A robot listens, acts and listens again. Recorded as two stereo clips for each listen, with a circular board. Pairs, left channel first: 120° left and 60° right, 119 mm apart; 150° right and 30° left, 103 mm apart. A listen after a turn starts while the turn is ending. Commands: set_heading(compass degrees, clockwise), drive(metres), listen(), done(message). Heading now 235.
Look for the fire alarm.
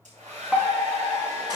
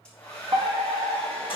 set_heading(210)
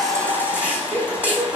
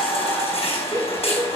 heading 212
done("Found it: a fire alarm, straight ahead.")